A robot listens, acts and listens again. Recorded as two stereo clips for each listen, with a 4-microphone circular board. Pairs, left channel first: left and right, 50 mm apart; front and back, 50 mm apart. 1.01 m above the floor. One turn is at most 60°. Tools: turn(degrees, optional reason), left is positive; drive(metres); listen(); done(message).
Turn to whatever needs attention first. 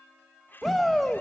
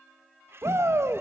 turn(degrees=60, reason="The shout: straight behind.")
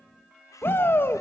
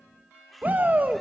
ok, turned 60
turn(degrees=60, reason="The shout is now 130° left.")
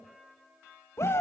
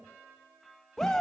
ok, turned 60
turn(degrees=60, reason="The shout is now 80° left.")
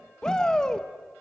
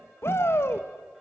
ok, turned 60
turn(degrees=15, reason="The shout is now 15° left.")
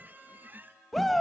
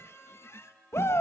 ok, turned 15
done("Facing the shout, 1 to 2 m away.")